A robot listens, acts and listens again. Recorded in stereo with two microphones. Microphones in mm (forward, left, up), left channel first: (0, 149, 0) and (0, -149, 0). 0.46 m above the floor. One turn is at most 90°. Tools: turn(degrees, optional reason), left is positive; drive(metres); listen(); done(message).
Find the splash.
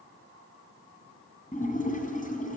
turn(degrees=25, reason="The splash: about 25° left or 155° left.")
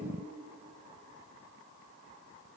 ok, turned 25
listen()
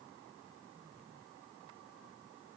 done("I heard a splash, but can't make it out now. It was about straight ahead or 130° left.")